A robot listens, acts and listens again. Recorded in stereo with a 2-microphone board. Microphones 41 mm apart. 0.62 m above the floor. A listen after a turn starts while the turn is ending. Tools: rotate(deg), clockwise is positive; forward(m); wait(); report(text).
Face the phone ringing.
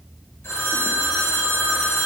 rotate(-90)
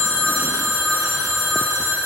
rotate(10)
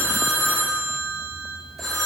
report("Facing the phone ringing.")